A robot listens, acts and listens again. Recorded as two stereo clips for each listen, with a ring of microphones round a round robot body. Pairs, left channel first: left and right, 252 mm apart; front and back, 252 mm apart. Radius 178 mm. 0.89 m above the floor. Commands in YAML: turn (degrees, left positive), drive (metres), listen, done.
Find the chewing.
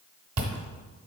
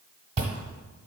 turn: -115
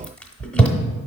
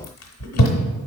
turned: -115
done: "Found it: chewing, straight ahead."